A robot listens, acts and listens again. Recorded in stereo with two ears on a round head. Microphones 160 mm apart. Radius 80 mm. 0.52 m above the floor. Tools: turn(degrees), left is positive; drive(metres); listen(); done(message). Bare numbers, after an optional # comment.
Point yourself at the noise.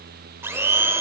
turn(-30)
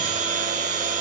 # So it is at 135° right.
turn(-135)
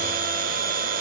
# The blender is now 50° right.
turn(-50)
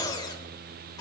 # The blender is now 25° left.
turn(25)
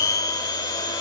# The blender is now 25° left.
turn(25)
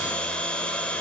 done("Facing the blender, under 1 m away.")